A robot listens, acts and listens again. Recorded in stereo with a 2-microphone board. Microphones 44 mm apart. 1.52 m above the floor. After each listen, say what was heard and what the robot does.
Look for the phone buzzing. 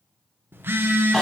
The phone buzzing: about 60° right or 120° right. Turn 60° right.
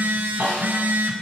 So it is at 50° right. Turn 50° right.
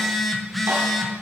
Facing the phone buzzing.